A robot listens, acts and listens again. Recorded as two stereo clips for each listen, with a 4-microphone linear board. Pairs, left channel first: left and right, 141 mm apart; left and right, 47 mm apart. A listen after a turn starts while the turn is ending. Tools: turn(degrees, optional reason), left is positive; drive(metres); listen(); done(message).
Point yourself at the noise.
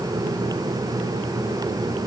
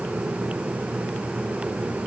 listen()
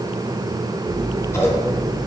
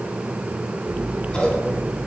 turn(degrees=20, reason="The scissors: about 20° left or 160° left.")
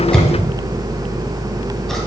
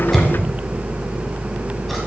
done("Facing the scissors.")